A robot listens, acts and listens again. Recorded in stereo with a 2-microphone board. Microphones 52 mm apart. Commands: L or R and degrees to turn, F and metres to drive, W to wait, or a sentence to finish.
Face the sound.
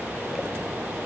W
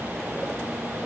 W
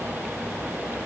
I can't make out anything to turn to.